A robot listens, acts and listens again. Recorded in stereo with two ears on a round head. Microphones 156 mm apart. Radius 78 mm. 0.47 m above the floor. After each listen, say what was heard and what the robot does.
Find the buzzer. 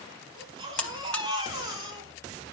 Turn 30° left.
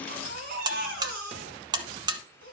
So it is at 25° right. Turn 25° right.
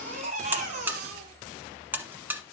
The buzzer is now 10° right. Turn 10° right.
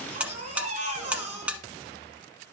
The buzzer is now 10° right. Turn 10° right.
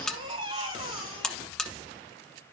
Facing the buzzer.